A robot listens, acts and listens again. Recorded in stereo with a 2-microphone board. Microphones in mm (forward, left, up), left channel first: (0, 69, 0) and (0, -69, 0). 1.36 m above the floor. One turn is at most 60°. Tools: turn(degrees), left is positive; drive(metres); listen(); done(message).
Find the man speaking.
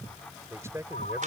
turn(degrees=-20)
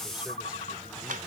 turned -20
listen()
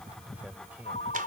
turn(degrees=-30)
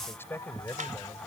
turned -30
turn(degrees=15)
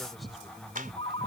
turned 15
listen()
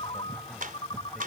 listen()
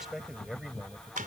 done("Found it: a man speaking, straight ahead.")